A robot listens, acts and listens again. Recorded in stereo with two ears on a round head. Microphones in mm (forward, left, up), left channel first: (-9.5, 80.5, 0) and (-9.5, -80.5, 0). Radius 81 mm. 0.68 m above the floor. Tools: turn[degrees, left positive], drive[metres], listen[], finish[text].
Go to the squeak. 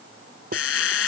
Action: turn[90]
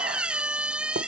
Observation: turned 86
Action: drive[1.0]
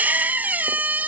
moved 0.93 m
Thought: The squeak is now 10° right.
Action: turn[-10]
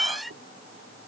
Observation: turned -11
Action: drive[1.0]
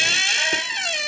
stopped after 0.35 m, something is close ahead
Action: finish[I am next to the squeak.]